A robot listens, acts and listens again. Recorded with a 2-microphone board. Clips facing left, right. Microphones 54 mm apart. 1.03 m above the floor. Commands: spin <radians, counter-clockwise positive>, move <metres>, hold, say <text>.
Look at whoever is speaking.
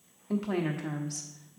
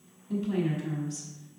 spin 1.13
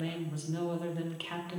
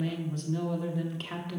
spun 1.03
say Found it: a woman speaking, straight ahead, 1 to 2 m away.